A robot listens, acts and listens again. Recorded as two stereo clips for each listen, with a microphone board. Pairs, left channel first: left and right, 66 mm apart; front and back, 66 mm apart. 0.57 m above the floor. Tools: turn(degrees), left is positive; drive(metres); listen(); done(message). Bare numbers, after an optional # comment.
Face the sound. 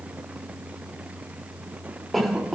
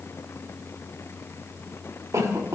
# The cough: straight behind.
turn(180)
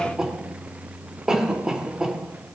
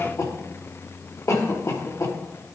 # The cough is now 15° right.
turn(-15)
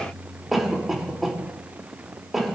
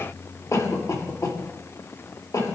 done("Found it: a cough, straight ahead, 1 to 2 m away.")